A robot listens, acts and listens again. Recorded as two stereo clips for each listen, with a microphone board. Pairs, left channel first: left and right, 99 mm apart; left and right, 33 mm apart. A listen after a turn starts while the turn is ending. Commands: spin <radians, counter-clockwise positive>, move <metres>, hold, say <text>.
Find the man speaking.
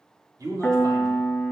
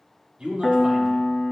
spin -0.70
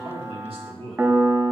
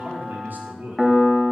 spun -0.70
spin -1.75
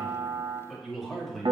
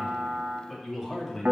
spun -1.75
say Found it: a man speaking, straight ahead.